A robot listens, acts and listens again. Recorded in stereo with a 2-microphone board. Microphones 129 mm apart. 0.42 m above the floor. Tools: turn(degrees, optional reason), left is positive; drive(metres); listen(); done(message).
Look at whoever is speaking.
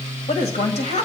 turn(degrees=60, reason="The woman speaking: about 60° left or 120° left.")
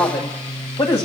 turn(degrees=50, reason="So it is at 50° left.")
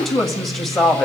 done("Facing the woman speaking, 1 to 2 m away.")